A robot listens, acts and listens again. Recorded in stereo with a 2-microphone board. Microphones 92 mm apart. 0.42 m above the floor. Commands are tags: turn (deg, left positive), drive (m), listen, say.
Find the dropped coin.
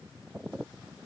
<listen/>
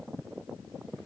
<listen/>
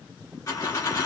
<turn deg="40"/>
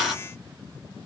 <say>Found it: a dropped coin, straight ahead, 2 to 4 m away.</say>